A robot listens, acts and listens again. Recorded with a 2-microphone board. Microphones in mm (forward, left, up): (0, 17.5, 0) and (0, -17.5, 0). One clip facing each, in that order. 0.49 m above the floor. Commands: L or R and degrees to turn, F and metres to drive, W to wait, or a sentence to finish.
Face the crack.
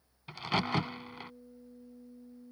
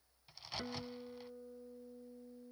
L65
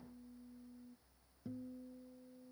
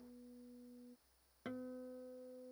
W
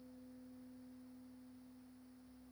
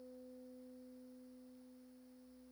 I heard a crack, but can't make it out now. It was about straight ahead or 50° left.